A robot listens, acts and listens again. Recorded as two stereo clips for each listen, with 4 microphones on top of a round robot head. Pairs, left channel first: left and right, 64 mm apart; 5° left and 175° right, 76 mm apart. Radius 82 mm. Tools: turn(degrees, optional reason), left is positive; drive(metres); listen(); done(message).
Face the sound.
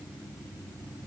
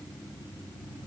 listen()
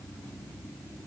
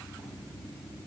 listen()
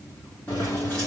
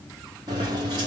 turn(degrees=175, reason="The keys jangling: 175° left.")
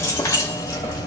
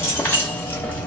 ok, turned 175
turn(degrees=75, reason="The keys jangling is now 75° left.")
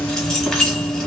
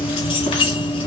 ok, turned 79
turn(degrees=10, reason="The keys jangling is now 10° left.")
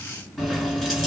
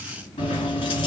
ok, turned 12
done("Facing the keys jangling, 1 to 2 m away.")